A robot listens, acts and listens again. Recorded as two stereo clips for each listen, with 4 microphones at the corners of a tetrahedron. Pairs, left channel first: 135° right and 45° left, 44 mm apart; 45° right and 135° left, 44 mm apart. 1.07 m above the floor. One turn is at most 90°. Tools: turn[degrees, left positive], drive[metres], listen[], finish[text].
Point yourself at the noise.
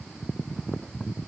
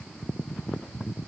Action: listen[]
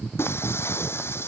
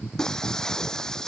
Thought: The breaking glass: 120° right.
Action: turn[-90]
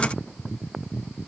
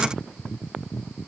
Thought: Nothing new. It was at 30° right.
Action: turn[-30]
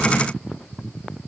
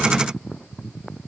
Action: finish[I heard breaking glass from this way, but can't make it out now.]